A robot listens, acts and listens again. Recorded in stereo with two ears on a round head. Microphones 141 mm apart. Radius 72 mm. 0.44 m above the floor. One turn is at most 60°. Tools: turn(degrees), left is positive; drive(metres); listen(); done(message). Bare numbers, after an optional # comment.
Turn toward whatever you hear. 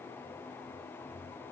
listen()
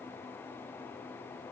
listen()
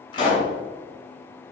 # The pop: about 30° left or 150° left.
turn(30)
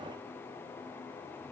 listen()
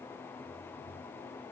done("I heard a pop, but can't make it out now. It was about straight ahead or 120° left.")